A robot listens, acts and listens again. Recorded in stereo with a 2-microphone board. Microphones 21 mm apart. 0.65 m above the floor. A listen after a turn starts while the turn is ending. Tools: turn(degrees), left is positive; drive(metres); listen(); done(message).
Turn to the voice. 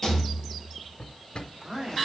turn(degrees=-25)
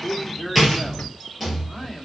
done("Facing the man speaking, 1 to 2 m away.")